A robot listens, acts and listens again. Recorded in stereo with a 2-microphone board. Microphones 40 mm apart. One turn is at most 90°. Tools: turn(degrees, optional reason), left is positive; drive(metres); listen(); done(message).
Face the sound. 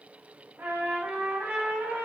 turn(degrees=-70, reason="The trumpet: about 70° right or 110° right.")
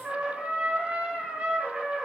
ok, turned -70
turn(degrees=-40, reason="So it is at 40° right.")
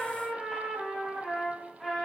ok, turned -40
done("Facing the trumpet.")